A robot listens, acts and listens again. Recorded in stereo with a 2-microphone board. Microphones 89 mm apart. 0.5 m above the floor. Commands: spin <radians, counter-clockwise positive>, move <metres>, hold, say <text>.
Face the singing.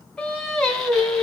spin 0.52
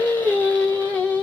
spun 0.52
spin 2.88
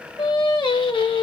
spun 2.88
spin 1.13
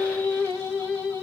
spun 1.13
spin 0.35
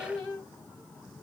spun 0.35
say Found it: singing, straight ahead.